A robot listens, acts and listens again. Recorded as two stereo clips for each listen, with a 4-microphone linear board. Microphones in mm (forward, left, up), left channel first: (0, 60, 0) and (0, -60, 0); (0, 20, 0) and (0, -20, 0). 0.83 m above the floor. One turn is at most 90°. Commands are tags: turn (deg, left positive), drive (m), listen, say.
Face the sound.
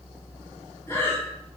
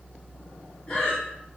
<turn deg="20"/>
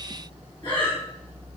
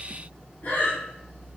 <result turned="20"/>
<turn deg="90"/>
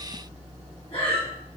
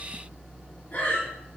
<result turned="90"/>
<turn deg="50"/>
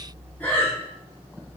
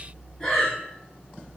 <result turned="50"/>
<turn deg="15"/>
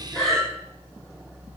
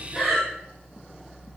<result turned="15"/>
<say>Found it: breathing, straight ahead.</say>